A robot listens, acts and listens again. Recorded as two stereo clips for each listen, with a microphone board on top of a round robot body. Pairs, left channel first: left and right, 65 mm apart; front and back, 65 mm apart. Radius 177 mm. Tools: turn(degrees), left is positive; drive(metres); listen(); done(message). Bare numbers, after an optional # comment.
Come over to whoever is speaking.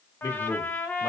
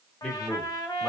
# The man speaking: 70° left.
turn(70)
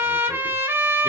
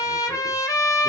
listen()
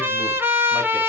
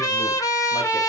listen()
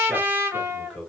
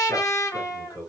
# The man speaking is now 15° left.
turn(15)
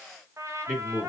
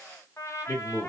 drive(1.0)
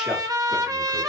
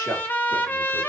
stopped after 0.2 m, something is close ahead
listen()
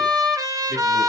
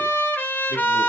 listen()
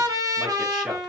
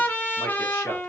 done("Facing where the man speaking came from. I can't hear it now. I did not reach it.")